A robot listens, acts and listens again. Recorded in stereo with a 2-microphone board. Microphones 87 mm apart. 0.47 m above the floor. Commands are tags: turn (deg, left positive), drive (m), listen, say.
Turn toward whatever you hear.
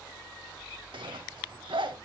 <turn deg="-90"/>
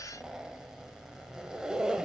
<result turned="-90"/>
<turn deg="-10"/>
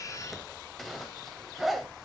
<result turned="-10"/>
<say>Facing the zipper, under 1 m away.</say>